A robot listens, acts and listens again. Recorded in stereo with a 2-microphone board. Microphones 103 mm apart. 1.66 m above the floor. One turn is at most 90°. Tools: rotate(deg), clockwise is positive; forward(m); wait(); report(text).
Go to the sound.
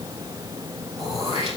rotate(-70)
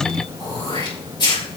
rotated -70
rotate(-40)
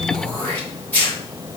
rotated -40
rotate(-15)
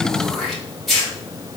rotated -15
forward(1.0)
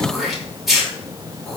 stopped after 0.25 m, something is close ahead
report("Blocked. The throat clearing is further on, straight ahead.")